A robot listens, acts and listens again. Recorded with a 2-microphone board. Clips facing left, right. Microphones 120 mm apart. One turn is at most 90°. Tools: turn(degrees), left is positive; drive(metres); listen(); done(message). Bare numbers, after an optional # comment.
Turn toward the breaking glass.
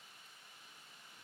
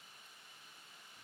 listen()
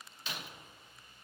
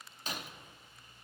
# The breaking glass: about 40° right or 140° right.
turn(-40)
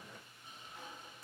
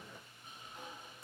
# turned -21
listen()
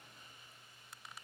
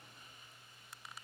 done("I heard breaking glass, but can't make it out now. It was about 20° right or 120° right.")